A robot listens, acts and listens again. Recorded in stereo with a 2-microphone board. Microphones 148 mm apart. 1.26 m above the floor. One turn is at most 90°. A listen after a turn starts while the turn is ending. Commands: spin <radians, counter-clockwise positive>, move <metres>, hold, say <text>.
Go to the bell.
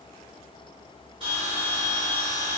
spin -0.70
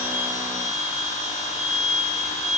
move 1.0
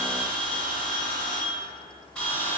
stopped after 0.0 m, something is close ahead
say Something is in my way. I am facing the bell but have not reached it.